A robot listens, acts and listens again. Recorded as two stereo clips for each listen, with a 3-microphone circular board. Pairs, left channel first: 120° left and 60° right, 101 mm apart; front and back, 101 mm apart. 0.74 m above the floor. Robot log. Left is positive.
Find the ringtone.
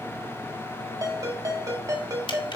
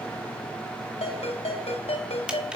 end: Found it: a ringtone, straight ahead.